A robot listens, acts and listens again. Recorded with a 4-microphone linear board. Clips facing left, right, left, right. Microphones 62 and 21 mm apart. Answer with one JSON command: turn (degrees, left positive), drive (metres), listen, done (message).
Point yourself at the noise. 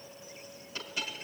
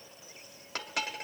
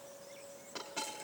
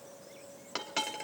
{"turn": -70}
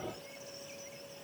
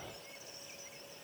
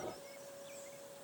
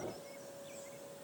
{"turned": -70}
{"listen": true}
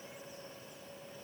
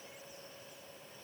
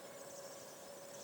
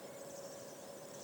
{"done": "I heard a dropped coin, but can't make it out now. It was about straight ahead or 40° right."}